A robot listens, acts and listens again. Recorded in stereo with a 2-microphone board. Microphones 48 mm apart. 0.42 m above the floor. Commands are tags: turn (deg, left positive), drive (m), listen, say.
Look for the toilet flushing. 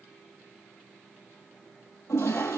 <turn deg="90"/>
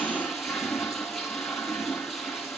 <say>Facing the toilet flushing.</say>